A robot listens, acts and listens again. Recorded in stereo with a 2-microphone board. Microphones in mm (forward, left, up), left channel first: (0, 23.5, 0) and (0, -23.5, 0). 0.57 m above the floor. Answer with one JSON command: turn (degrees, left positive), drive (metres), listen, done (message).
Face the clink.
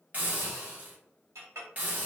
{"turn": -90}
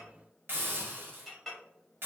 {"done": "Found it: a clink, straight ahead."}